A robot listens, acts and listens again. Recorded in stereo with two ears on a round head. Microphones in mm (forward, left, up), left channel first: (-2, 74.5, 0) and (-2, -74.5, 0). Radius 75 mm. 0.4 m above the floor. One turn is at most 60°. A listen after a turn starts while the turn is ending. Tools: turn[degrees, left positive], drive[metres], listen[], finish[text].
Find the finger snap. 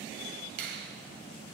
Thought: The finger snap: about 65° right or 115° right.
Action: turn[-60]
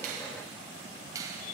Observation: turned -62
Thought: So it is at 25° right.
Action: turn[-25]
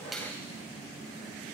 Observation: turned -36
Thought: Nothing new. It was at 15° left.
Action: turn[15]
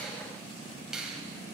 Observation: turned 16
Action: finish[Facing the finger snap.]